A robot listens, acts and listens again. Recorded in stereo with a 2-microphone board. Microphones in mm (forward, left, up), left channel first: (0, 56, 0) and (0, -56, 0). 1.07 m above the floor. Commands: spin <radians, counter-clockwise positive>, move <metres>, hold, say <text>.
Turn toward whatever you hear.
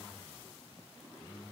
hold
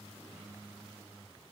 hold
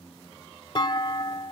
spin 0.70
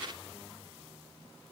hold
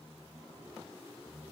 say I heard a clunk, but can't make it out now. It was about straight ahead or 100° left.